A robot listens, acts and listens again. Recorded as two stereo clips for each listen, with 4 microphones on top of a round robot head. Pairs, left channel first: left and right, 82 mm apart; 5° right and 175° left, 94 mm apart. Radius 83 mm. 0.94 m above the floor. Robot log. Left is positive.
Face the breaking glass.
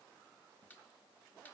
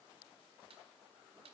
cmd idle
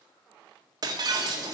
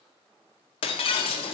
note: The breaking glass: 40° right.
cmd yaw -40
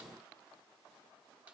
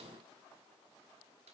end: Facing where the breaking glass came from. I can't hear it now.